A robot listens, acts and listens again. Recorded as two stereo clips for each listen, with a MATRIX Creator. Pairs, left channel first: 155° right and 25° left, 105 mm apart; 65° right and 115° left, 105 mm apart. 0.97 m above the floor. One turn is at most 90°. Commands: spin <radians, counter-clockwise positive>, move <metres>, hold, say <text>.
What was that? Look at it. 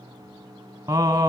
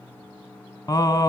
spin -0.44
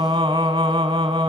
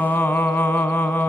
say Found it: singing, straight ahead.